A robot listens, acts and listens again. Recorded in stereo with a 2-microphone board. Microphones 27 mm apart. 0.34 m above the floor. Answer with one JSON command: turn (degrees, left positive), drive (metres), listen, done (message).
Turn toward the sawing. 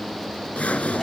{"turn": 65}
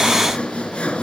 {"turn": 50}
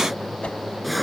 {"done": "Facing the sawing."}